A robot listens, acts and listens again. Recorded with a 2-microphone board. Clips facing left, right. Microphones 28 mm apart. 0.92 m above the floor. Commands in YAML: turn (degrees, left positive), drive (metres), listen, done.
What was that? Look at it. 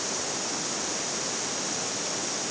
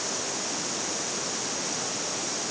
listen: true
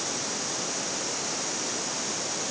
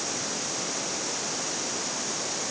listen: true
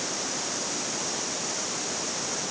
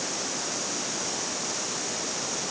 done: "I can't make out anything to turn to."